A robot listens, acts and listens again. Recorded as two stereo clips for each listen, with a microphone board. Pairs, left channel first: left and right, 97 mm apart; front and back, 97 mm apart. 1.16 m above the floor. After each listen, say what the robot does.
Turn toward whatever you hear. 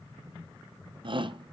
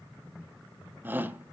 Turn 110° right.
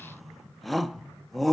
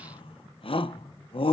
Facing the shout.